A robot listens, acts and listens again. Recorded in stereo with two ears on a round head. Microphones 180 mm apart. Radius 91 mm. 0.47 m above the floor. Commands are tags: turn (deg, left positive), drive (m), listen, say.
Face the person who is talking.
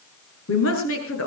<turn deg="90"/>
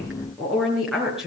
<say>Found it: a woman speaking, straight ahead, over 4 m away.</say>